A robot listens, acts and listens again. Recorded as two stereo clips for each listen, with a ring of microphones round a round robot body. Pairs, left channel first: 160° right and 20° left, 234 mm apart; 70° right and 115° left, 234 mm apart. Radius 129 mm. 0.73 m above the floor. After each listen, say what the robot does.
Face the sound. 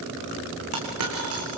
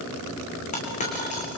Facing the dropped coin.